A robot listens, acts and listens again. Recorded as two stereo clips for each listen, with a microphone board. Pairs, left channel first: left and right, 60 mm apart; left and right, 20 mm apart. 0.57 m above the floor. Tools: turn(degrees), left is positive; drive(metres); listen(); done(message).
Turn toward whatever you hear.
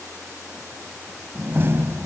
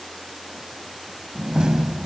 turn(degrees=-40)
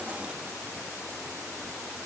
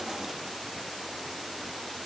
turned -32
listen()
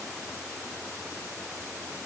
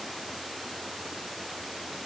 done("I heard a door slam, but can't make it out now. It was about 5° right or 110° right.")